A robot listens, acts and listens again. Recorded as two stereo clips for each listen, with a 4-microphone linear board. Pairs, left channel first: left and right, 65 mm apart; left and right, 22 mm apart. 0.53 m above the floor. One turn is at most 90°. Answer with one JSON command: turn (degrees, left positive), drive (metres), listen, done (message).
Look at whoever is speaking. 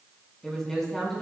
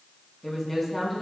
{"turn": 30}
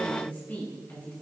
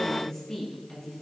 {"turn": 90}
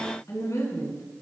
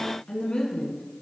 {"turn": 60}
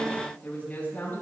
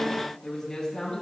{"turn": 30}
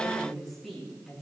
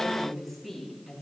{"done": "Found it: a woman speaking, straight ahead."}